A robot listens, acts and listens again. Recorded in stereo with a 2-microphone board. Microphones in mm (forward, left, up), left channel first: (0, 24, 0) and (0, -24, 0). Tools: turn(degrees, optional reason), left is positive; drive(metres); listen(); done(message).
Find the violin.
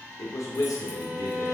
turn(degrees=-55, reason="The violin: about 55° right or 125° right.")
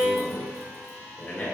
turn(degrees=-65, reason="So it is at 65° right.")
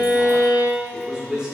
turn(degrees=-20, reason="The violin is now 20° right.")
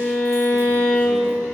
done("Found it: a violin, straight ahead.")